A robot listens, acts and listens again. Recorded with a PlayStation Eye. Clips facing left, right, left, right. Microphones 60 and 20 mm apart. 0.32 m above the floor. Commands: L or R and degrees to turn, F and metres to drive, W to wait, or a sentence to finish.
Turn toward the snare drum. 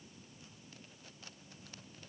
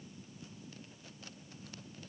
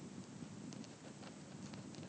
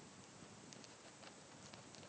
W
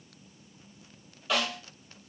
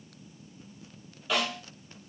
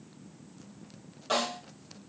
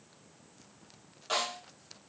L30
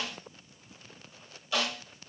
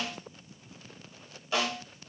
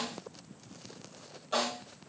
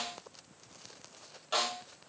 R30
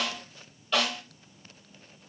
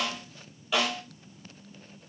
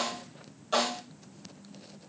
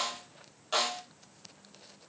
Facing the snare drum.